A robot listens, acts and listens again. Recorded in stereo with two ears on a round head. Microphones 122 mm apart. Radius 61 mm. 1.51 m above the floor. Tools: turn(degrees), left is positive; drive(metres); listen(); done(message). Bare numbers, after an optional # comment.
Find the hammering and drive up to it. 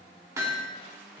# The hammering: about 25° right or 155° right.
turn(-25)
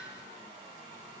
# So it is at 125° right.
turn(-125)
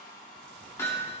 # The hammering is now 20° left.
turn(20)
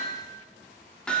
# The hammering is now 10° left.
turn(10)
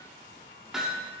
drive(1.0)
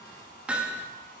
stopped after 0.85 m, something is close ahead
# The hammering is now 10° right.
turn(-10)
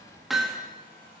done("I am next to the hammering.")